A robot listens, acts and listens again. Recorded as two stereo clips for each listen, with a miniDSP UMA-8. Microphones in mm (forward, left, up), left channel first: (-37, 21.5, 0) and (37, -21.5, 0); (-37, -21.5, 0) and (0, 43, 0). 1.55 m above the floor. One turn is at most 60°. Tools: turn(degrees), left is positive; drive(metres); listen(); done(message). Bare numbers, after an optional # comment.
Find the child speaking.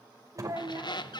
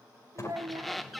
# The child speaking: 25° left.
turn(25)
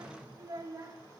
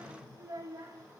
# The child speaking is now 20° left.
turn(20)
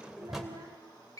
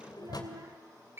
listen()
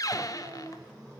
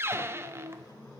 # The child speaking is now 25° left.
turn(25)
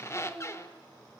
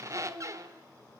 # The child speaking is now 20° left.
turn(20)
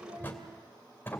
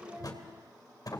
listen()
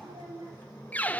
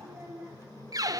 done("Facing the child speaking, over 4 m away.")